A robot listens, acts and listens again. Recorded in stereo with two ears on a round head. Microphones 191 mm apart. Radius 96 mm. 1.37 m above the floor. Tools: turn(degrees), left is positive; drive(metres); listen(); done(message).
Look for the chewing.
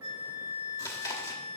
turn(degrees=15)
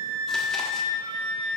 listen()
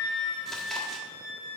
listen()
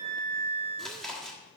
done("Facing the chewing.")